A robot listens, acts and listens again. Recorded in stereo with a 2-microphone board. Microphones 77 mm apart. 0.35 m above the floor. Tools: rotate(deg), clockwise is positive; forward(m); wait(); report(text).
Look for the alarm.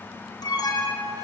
rotate(-60)
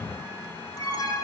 rotate(-60)
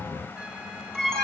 report("Found it: an alarm, straight ahead.")